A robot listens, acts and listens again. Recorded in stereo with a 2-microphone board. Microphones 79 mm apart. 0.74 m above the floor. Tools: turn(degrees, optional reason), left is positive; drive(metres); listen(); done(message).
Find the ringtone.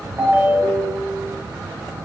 turn(degrees=-30, reason="The ringtone: about 30° right or 150° right.")
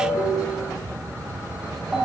done("Found it: a ringtone, straight ahead, 2 to 4 m away.")